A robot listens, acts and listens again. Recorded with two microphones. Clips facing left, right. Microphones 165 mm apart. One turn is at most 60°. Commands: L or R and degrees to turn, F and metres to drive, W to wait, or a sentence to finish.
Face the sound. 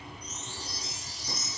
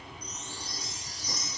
L25
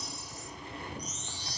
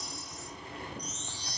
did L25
Facing the chime, under 1 m away.